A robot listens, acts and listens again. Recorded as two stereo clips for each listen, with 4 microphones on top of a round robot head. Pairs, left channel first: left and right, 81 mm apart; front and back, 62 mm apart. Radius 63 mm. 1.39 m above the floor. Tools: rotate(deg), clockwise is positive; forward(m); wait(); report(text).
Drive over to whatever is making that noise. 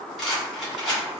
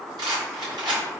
rotate(-175)
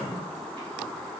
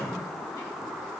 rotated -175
wait()
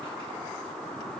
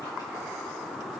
wait()
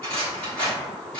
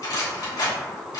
rotate(-10)
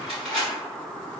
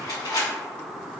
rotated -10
forward(1.0)
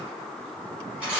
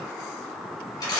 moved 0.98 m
rotate(10)
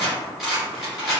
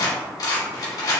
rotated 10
forward(1.0)
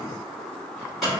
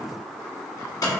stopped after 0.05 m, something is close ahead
report("I am next to the rattle.")